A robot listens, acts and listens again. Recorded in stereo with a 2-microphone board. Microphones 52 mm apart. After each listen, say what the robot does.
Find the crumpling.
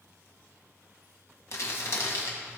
Turn 65° left.
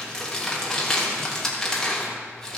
Turn 10° left.
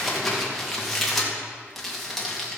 Facing the crumpling, 2 to 4 m away.